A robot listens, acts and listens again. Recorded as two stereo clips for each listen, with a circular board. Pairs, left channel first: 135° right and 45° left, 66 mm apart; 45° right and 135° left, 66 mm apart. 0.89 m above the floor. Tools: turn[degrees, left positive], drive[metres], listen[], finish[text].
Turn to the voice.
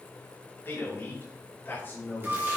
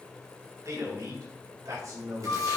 Thought: The man speaking: 165° left.
Action: turn[165]
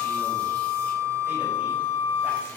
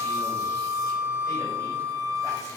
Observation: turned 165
Action: listen[]
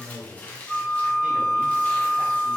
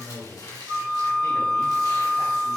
Thought: The man speaking is now 20° right.
Action: turn[-20]
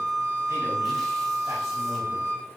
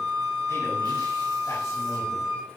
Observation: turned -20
Action: listen[]
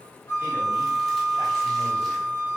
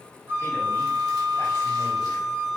Action: listen[]
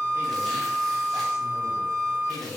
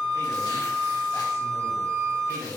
Action: finish[Facing the man speaking, over 4 m away.]